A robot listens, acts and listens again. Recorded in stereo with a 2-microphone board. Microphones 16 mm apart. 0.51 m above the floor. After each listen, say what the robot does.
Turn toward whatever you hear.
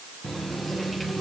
Turn 30° left.
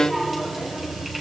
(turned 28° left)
Turn 10° right.
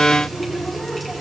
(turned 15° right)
Found it: a running tap, straight ahead.